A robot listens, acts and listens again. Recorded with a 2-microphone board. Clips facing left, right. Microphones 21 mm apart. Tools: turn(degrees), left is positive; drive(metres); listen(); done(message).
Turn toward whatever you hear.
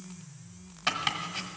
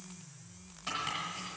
turn(degrees=50)
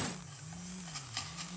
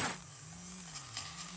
listen()
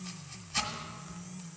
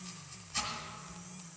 turn(degrees=20)
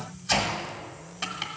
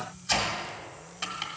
done("Found it: chopping, straight ahead, 1 to 2 m away.")